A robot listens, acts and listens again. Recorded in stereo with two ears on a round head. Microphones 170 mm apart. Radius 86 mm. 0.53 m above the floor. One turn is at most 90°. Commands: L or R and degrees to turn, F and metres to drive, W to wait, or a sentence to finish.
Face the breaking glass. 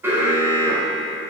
W
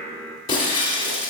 L25
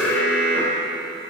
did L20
W
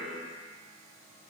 I heard breaking glass, but can't make it out now. It was about 5° left or 135° left.